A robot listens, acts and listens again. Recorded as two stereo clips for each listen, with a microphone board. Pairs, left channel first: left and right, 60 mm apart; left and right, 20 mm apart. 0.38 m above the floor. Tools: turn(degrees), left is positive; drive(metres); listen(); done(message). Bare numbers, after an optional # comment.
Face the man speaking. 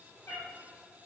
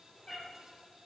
listen()
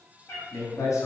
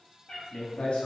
# The man speaking: about 70° left or 110° left.
turn(70)
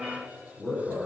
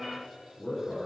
# So it is at 10° left.
turn(10)
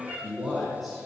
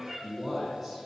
done("Found it: a man speaking, straight ahead, over 4 m away.")